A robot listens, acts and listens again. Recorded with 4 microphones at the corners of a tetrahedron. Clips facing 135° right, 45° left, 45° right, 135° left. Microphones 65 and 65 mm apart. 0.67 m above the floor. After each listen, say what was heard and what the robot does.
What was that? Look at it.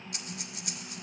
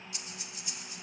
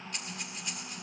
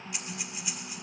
The breathing: 145° right. Turn 145° right.
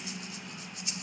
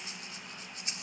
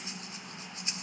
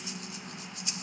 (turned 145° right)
Found it: breathing, straight ahead.